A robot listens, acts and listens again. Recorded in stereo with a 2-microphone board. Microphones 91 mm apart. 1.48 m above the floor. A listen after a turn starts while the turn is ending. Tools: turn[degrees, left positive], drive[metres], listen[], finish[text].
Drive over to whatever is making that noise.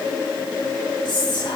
Thought: The whispering: about 60° left or 120° left.
Action: turn[60]
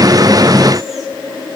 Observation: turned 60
Action: listen[]
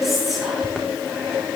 Action: drive[1.0]
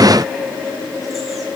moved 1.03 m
Action: listen[]
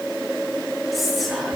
Action: drive[1.0]
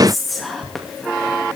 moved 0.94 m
Action: drive[1.0]
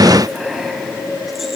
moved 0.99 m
Action: listen[]
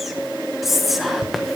Action: drive[1.0]
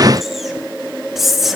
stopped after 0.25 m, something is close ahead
Action: finish[I am next to the whispering.]